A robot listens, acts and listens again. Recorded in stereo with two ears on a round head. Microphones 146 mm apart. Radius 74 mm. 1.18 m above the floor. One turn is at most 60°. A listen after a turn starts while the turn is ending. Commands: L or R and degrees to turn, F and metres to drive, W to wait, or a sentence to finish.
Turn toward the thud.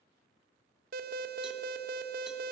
W
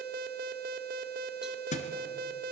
L45
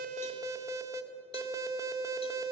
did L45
W
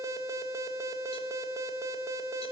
I heard a thud, but can't make it out now. It was about straight ahead or 90° left.